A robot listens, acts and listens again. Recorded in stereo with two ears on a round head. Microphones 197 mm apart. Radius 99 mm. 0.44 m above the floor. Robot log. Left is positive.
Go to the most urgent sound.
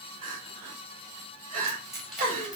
note: The crying: about 35° right or 145° right.
cmd yaw -35
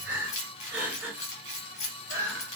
note: So it is at 10° right.
cmd yaw -10
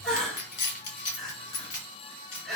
cmd fwd 1.0
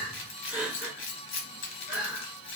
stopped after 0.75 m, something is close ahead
note: The crying is now 10° right.
cmd yaw -10
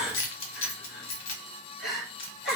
end: I am next to the crying.